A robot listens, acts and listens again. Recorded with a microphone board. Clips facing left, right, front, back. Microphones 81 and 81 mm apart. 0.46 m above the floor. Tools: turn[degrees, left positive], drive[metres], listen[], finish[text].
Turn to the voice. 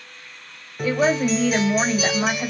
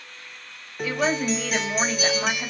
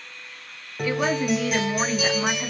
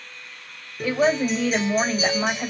Thought: The woman speaking: 135° left.
Action: turn[135]
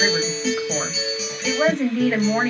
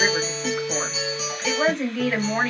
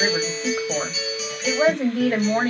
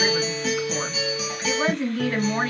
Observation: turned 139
Action: finish[Found it: a woman speaking, straight ahead, 2 to 4 m away.]